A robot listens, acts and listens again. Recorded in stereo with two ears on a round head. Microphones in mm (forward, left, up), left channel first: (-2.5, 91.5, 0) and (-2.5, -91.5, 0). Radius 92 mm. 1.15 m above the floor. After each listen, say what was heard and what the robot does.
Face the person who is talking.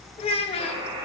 The child speaking: about 30° left or 150° left. Turn 30° left.
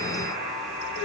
Keep listening.
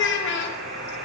So it is at 120° left. Turn 120° left.
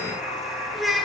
Found it: a child speaking, straight ahead, 1 to 2 m away.